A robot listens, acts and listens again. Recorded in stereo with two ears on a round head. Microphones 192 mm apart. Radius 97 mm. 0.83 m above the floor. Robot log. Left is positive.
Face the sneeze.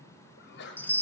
note: The sneeze: about 55° left or 125° left.
cmd yaw +55
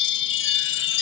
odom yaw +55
cmd idle
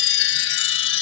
end: I heard a sneeze, but can't make it out now. It was about straight ahead or 70° left.